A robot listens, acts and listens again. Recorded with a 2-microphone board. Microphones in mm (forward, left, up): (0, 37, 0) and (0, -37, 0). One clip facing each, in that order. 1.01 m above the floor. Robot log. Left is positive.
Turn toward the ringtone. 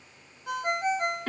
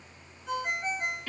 cmd yaw +90
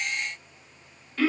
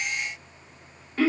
cmd idle
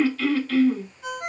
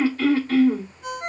end: Found it: a ringtone, straight ahead.